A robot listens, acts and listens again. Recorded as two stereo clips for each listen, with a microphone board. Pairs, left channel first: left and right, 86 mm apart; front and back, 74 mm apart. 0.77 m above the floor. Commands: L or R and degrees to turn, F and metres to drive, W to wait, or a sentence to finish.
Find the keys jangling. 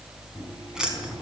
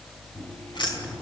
Found it: keys jangling, straight ahead.